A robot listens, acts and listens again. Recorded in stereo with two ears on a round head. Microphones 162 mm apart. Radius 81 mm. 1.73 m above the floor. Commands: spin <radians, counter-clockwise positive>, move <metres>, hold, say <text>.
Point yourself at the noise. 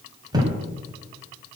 spin -0.44
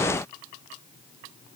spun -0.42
hold
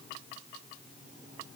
say I heard a thud, but can't make it out now. It was about straight ahead or 135° right.